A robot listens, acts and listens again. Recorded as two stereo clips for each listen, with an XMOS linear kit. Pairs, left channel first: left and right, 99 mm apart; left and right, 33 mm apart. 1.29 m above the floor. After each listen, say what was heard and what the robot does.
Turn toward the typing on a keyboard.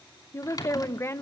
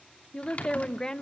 The typing on a keyboard: about 40° left or 140° left. Turn 40° left.
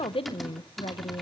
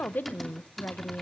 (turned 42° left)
Facing the typing on a keyboard, 2 to 4 m away.